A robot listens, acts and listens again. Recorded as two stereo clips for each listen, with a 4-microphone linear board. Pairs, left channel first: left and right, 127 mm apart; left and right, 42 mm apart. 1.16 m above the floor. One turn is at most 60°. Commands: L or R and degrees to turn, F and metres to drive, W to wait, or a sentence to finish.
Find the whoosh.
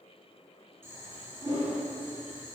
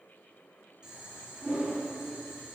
R40
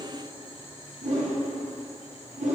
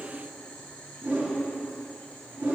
R60
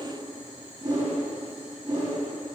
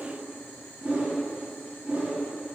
R35
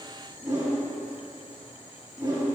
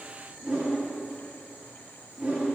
R25
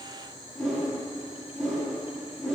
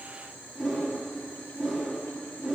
Found it: a whoosh, straight ahead.